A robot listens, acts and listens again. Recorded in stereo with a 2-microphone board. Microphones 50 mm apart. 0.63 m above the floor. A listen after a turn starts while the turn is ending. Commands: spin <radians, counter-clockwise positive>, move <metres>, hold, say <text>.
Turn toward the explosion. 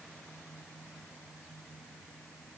hold
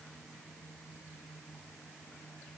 hold
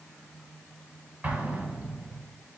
spin -0.52
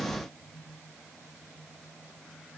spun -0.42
hold
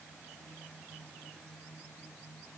say I heard an explosion, but can't make it out now. It was about 5° right or 125° right.